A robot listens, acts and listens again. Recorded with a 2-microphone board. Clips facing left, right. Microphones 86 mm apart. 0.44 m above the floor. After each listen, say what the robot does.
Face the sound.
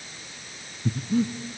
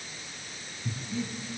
Turn 55° left.
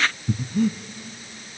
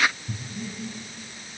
Turn 70° left.
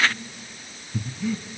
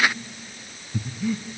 Facing the breathing.